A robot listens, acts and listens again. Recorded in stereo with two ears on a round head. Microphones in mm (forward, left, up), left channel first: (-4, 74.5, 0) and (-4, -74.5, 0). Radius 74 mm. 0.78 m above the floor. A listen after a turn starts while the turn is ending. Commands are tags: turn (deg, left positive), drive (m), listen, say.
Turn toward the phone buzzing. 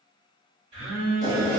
<turn deg="-40"/>
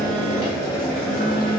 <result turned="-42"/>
<say>Facing the phone buzzing.</say>